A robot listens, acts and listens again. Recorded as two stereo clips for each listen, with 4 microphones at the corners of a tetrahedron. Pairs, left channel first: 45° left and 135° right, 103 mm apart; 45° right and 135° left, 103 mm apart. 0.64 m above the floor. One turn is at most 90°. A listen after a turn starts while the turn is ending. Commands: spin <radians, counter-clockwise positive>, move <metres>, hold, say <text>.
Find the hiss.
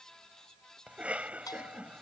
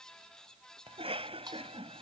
hold
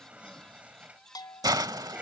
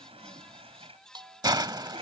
spin 1.57
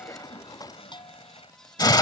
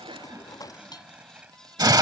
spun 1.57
spin 1.57
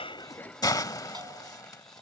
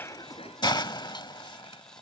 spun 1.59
say Facing the hiss.